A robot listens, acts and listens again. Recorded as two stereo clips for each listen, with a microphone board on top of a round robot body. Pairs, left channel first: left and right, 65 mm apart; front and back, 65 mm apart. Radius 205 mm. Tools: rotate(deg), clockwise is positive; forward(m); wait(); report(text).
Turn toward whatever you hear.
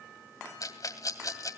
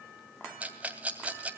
rotate(-115)
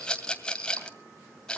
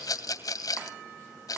rotate(-15)
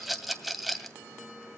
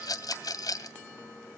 report("Found it: a rattle, straight ahead.")